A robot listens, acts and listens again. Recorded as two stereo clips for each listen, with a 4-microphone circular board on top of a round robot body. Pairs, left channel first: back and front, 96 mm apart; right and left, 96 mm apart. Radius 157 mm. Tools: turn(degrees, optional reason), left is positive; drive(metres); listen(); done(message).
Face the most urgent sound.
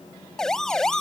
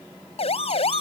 turn(degrees=-95, reason="The siren: 95° right.")
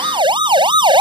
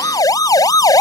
turn(degrees=-40, reason="The siren is now 40° right.")
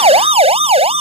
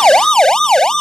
done("Facing the siren.")